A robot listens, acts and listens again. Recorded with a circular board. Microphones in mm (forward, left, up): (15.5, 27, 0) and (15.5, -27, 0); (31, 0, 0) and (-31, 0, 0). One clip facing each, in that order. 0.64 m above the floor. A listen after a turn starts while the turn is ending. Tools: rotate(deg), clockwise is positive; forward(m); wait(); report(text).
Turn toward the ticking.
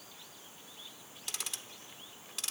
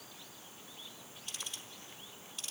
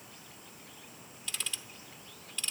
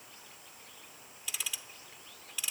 rotate(-95)
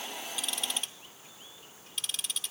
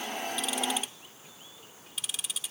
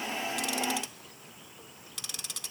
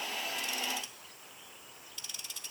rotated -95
report("Found it: ticking, straight ahead, under 1 m away.")